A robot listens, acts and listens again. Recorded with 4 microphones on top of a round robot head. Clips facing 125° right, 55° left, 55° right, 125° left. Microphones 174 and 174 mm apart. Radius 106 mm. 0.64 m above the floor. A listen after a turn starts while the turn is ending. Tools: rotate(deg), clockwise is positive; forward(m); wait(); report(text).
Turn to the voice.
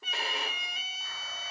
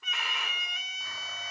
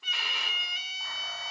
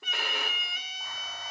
wait()
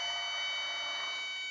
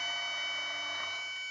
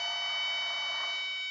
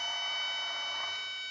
wait()
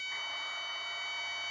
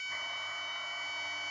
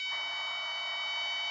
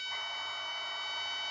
report("I can't make out anyone speaking, only a violin.")